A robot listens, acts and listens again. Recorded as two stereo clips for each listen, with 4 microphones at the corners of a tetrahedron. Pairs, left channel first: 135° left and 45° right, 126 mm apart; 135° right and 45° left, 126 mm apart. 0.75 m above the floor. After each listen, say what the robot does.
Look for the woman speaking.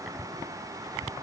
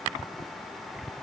Keep listening.
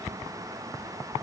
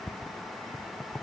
Keep listening.
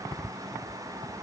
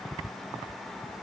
I can't make out a woman speaking to turn to.